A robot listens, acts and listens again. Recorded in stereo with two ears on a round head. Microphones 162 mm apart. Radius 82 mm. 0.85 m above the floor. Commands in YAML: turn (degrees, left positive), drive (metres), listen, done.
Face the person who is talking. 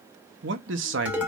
turn: -70
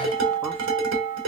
listen: true
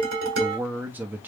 turn: -10
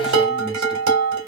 listen: true
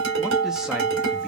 listen: true
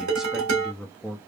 done: "Found it: a man speaking, straight ahead."